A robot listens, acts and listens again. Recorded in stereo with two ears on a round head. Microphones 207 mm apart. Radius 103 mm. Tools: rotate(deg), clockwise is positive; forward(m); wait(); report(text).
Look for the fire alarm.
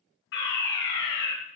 rotate(-55)
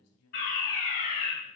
rotate(-45)
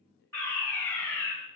rotate(-10)
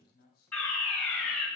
report("Facing the fire alarm, over 4 m away.")